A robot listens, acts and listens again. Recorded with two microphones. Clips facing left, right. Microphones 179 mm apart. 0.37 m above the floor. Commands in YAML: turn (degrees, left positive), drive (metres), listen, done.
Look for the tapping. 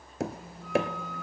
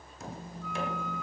turn: 90
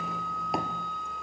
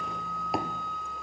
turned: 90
listen: true
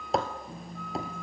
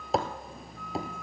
done: "Found it: tapping, straight ahead."